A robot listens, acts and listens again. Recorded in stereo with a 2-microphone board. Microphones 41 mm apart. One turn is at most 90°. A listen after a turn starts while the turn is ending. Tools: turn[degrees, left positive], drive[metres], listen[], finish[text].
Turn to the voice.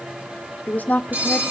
Thought: The woman speaking: about 45° left or 135° left.
Action: turn[45]
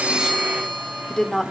Thought: So it is at 15° left.
Action: turn[15]
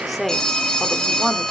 Action: finish[Facing the woman speaking.]